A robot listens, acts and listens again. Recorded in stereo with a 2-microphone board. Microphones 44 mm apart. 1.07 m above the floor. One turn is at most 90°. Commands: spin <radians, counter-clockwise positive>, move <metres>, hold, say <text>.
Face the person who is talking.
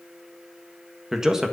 spin -0.52
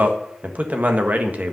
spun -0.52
spin -1.57
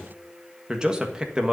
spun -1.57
spin -0.35
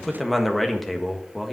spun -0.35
say Facing the man speaking.